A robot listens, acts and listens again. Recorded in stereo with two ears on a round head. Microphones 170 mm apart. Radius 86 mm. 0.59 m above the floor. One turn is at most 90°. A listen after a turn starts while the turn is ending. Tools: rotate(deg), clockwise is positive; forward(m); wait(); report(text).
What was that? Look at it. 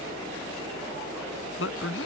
rotate(-90)
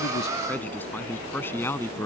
rotate(-15)
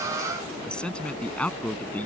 rotate(-10)
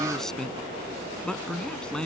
report("Facing the man speaking.")